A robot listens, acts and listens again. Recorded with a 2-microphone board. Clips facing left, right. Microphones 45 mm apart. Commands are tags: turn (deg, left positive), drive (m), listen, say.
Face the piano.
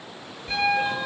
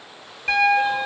<turn deg="-90"/>
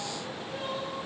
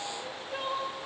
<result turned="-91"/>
<listen/>
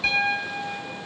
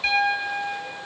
<turn deg="-10"/>
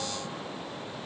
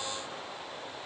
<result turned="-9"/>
<listen/>
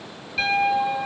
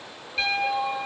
<say>Facing the piano, 2 to 4 m away.</say>